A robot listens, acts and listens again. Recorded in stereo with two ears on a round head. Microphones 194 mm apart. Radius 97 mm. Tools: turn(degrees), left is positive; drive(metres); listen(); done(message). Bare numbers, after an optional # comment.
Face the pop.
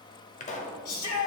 # The pop: about 35° left or 145° left.
turn(35)
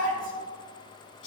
listen()
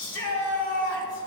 done("I heard a pop, but can't make it out now. It was about straight ahead or 110° left.")